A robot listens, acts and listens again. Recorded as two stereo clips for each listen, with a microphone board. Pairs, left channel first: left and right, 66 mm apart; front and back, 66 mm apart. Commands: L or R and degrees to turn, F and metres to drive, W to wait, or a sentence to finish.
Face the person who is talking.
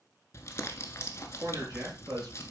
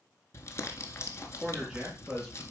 R105
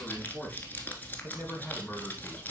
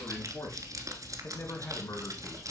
L15
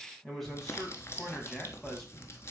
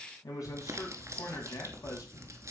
Facing the man speaking, 2 to 4 m away.